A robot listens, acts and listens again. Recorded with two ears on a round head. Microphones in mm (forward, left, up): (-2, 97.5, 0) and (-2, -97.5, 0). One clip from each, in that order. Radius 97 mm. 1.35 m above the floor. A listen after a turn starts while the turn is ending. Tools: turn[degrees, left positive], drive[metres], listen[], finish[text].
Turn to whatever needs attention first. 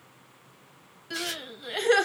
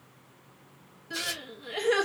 Thought: The crying: about 35° left or 145° left.
Action: turn[35]
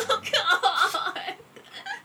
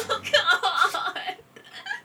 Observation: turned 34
Action: finish[Found it: crying, straight ahead, 1 to 2 m away.]